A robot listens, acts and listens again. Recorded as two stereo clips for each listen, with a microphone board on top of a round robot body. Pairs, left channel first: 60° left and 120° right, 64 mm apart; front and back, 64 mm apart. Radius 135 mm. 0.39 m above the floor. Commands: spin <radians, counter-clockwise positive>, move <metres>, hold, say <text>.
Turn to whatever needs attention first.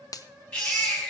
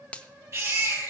spin 2.27
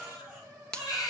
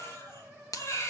spin 0.79
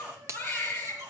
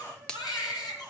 spin -0.26
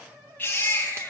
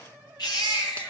say Found it: a baby crying, straight ahead.